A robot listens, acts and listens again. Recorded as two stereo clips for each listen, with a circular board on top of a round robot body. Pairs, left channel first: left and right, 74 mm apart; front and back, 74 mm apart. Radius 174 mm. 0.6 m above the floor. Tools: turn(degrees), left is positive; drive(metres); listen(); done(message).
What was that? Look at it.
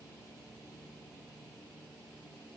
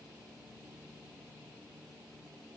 listen()
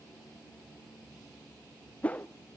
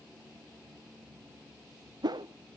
turn(degrees=160)
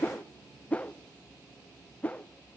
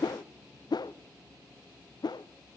turn(degrees=20)
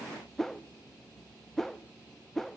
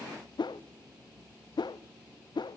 done("Found it: a whoosh, straight ahead, under 1 m away.")